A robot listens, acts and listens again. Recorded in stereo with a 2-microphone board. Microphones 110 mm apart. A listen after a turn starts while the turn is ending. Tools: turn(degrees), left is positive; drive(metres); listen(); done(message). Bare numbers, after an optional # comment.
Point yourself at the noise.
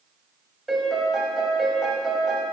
turn(30)
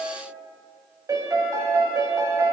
# So it is at 30° right.
turn(-30)
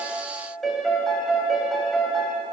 done("Found it: a piano, straight ahead.")